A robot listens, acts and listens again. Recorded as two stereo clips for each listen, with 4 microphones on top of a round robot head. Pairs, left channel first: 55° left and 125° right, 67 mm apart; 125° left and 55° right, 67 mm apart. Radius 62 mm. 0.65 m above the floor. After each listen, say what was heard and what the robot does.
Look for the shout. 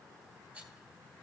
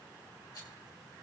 Keep listening.
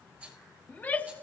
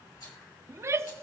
The shout: 10° right. Turn 10° right.
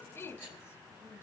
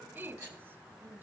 Found it: a shout, straight ahead, under 1 m away.